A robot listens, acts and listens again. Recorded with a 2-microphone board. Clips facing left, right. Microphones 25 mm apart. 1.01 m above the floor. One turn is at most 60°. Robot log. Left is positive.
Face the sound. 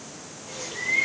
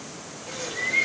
cmd yaw -60
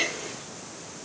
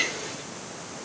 note: So it is at 40° right.
cmd yaw -40
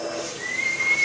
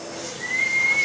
end: Found it: a bird, straight ahead, 1 to 2 m away.